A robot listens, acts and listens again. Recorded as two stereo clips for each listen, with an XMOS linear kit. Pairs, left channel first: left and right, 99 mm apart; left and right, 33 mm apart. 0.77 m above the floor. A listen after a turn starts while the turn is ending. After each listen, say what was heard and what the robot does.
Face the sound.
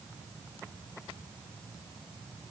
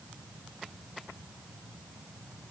Keep listening.
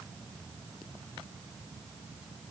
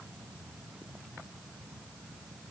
Keep listening.
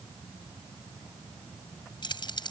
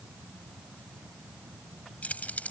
The keys jangling: about 50° left or 130° left. Turn 50° left.
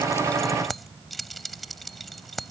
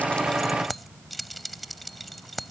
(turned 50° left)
Facing the keys jangling.